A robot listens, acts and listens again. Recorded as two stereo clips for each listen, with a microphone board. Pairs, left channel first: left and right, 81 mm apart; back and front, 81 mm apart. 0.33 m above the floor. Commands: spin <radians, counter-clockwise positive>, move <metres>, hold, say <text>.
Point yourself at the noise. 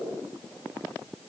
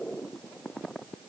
hold
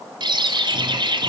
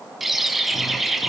spin -1.48
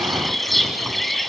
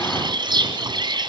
say Found it: a bird, straight ahead, 1 to 2 m away.